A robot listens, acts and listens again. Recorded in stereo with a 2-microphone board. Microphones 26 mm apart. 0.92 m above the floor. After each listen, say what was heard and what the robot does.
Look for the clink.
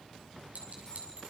The clink: about 75° right or 105° right. Turn 75° right.
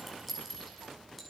Found it: a clink, straight ahead.